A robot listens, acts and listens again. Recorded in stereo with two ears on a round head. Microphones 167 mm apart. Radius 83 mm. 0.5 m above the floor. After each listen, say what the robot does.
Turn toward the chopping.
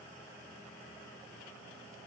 Keep listening.
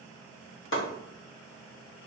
Turn 90° left.
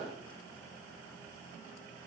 Keep listening.
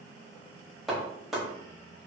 Found it: chopping, straight ahead.